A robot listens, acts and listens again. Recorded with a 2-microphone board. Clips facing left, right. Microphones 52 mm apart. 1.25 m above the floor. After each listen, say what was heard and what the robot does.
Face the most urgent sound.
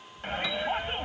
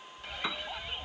The shout: about 45° left or 135° left. Turn 45° left.
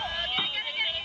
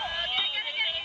Facing the shout.